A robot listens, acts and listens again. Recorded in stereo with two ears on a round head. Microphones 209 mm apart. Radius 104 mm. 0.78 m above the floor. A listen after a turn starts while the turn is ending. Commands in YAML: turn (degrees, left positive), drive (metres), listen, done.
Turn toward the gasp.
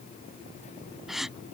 turn: 30
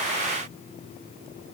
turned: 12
listen: true
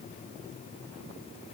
done: "I heard a gasp, but can't make it out now. It was about 15° right or 170° left."